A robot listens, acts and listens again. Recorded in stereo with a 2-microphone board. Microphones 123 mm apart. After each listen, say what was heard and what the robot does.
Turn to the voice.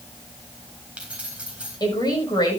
The woman speaking: about 35° left or 145° left. Turn 35° left.
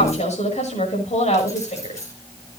So it is at 110° left. Turn 110° left.
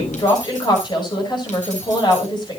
The woman speaking is now 40° left. Turn 40° left.
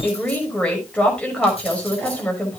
The woman speaking is now 10° left. Turn 10° left.
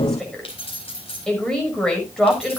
Facing the woman speaking, over 4 m away.